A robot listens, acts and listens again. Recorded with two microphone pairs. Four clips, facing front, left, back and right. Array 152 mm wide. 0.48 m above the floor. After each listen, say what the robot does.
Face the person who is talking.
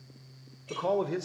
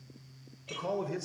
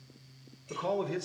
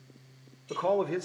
Turn 55° right.
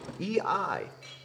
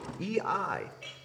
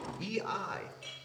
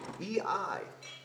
Turn 20° left.
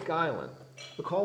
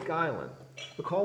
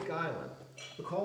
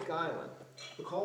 Turn 50° left.
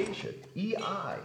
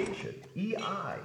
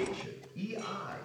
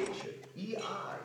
Turn 25° left.
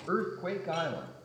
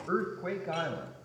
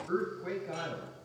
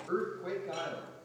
Turn 25° left.
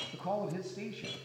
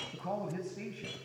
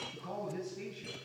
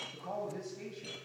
Turn 20° left.
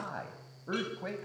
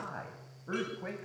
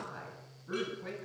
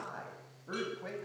Turn 10° left.
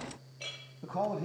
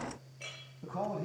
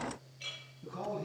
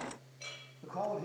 Facing the man speaking, 2 to 4 m away.